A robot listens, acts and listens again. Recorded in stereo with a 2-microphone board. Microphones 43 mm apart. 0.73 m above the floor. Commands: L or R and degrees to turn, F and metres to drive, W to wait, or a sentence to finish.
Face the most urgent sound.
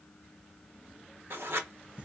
W
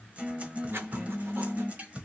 W
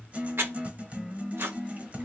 I can't make out anything urgent to turn to.